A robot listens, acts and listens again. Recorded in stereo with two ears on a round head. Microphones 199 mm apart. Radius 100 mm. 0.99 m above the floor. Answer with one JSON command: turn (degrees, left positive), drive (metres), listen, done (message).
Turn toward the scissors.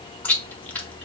{"listen": true}
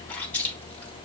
{"listen": true}
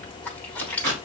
{"turn": -90}
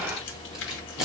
{"done": "Facing the scissors."}